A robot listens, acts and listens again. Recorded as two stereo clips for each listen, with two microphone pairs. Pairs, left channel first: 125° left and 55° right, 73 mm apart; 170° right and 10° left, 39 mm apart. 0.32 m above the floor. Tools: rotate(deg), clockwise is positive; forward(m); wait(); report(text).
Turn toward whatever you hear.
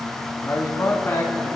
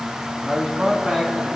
rotate(-80)
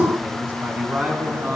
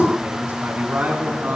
rotate(-10)
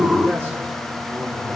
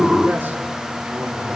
wait()
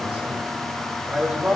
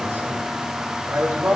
rotate(-10)
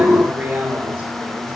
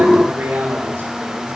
report("Facing the man speaking, over 4 m away.")